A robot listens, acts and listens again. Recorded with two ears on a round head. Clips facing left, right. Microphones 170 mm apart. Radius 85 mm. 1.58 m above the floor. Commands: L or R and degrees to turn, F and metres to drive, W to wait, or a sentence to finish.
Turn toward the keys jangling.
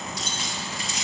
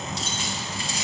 R30
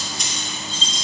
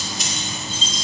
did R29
Found it: keys jangling, straight ahead, 2 to 4 m away.